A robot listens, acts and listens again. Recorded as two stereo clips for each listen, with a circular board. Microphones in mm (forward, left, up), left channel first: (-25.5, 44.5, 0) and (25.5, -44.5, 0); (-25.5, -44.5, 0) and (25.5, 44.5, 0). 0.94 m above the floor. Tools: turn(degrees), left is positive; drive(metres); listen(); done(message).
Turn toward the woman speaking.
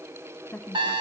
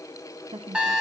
turn(degrees=50)
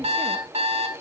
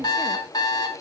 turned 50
listen()
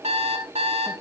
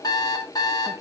listen()
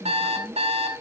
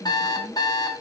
done("Facing the woman speaking.")